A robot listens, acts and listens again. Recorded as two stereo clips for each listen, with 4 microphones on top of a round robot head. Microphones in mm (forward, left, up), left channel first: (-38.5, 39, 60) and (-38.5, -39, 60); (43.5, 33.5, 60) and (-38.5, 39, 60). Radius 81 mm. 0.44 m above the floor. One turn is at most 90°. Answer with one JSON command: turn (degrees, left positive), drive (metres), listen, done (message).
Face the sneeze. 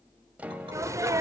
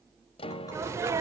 {"turn": -90}
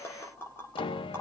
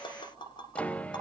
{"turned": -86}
{"turn": -45}
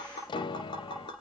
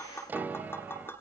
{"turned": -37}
{"turn": -10}
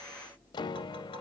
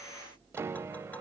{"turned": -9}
{"done": "I heard a sneeze from this way, but can't make it out now."}